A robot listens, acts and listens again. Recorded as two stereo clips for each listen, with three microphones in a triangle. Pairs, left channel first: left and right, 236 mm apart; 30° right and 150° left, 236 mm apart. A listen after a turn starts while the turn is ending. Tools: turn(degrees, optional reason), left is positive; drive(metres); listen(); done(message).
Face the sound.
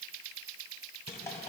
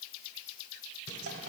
turn(degrees=170, reason="The drawer: 170° left.")
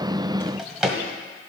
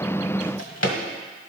done("Facing the drawer.")